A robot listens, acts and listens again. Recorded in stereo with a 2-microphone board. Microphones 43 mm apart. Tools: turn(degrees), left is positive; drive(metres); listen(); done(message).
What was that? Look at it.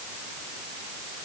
listen()
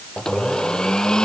turn(degrees=15)
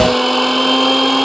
done("Facing the blender.")